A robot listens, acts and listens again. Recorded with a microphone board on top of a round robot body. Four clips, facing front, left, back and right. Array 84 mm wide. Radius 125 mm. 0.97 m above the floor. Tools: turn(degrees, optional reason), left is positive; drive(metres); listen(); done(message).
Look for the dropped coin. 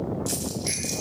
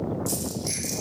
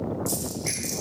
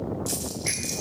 turn(degrees=-30, reason="The dropped coin: 30° right.")
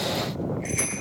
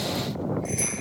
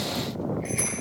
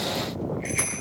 done("Facing where the dropped coin came from. I can't hear it now.")